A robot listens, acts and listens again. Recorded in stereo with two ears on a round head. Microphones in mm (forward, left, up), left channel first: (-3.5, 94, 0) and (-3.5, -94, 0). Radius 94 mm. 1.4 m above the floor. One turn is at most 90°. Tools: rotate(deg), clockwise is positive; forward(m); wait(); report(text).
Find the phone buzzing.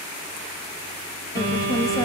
rotate(50)
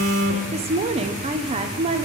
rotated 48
rotate(75)
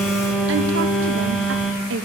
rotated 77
report("Facing the phone buzzing.")